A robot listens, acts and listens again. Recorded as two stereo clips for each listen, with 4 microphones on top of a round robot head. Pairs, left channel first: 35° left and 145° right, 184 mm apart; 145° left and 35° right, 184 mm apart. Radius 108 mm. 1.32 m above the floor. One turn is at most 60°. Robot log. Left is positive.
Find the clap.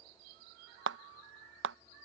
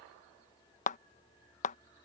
note: The clap: 165° right.
cmd yaw -60
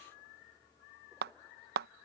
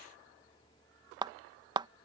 note: The clap is now 105° right.
cmd yaw -60
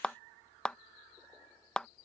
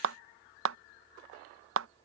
note: The clap is now 50° right.
cmd yaw -50
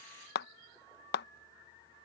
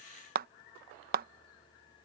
end: Facing the clap.